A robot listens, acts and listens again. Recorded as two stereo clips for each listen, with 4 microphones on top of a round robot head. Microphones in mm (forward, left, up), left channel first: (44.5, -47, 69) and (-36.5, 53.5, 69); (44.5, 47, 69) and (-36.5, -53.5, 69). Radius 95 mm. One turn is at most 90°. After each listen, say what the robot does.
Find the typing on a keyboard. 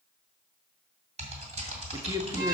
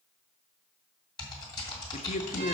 Turn 90° left.
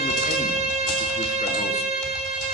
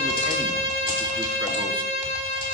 Turn 15° left.
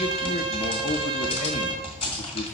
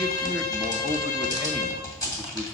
Turn 10° right.
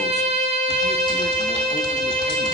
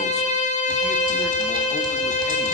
Keep listening.
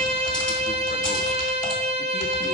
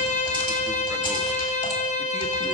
Keep listening.
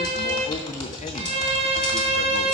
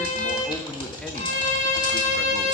Facing the typing on a keyboard, 2 to 4 m away.